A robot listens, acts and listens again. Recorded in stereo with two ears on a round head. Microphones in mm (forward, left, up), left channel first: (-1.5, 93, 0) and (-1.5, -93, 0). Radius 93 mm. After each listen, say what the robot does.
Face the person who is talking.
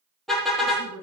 Turn 90° right.
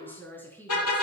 Turn 10° left.
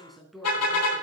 Facing the woman speaking.